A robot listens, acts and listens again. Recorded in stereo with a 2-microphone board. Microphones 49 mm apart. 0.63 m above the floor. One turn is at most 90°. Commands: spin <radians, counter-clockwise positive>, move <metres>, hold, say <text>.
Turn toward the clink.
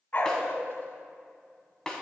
hold
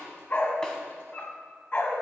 hold
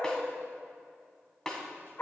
say I can't make out a clink to turn to.